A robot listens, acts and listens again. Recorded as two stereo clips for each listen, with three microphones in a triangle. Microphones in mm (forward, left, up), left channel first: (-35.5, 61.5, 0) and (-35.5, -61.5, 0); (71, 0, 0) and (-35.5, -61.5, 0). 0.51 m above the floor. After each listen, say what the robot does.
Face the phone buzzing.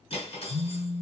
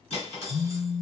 Turn 15° left.
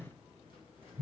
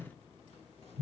Found it: a phone buzzing, straight ahead, 1 to 2 m away.